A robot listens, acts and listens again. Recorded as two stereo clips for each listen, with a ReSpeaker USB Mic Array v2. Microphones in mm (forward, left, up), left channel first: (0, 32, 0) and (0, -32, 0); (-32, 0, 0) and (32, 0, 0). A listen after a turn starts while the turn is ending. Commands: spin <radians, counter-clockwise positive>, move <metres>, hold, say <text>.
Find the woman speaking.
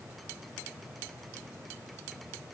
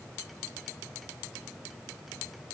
hold
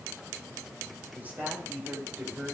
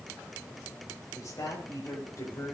spin -2.62
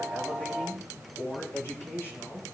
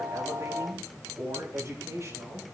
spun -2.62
spin 0.79
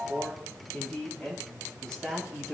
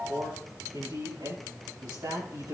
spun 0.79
spin 0.17
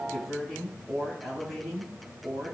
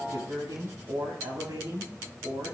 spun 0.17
say Found it: a woman speaking, straight ahead, over 4 m away.